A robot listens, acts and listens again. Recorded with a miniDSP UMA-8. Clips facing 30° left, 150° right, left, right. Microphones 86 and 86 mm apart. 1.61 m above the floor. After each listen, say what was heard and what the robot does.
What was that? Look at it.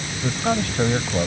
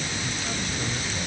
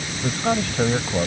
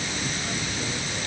The man speaking: 65° left. Turn 65° left.
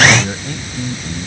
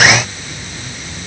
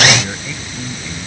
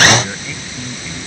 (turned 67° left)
Facing the man speaking.